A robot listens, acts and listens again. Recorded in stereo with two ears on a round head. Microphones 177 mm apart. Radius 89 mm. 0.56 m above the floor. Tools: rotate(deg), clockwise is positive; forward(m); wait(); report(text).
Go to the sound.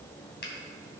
rotate(-60)
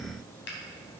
rotate(-60)
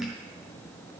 wait()
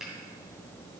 forward(1.0)
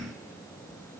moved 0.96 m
wait()
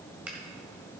forward(1.0)
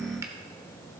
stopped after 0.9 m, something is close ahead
rotate(15)
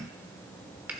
rotate(10)
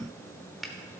report("I am next to the finger snap.")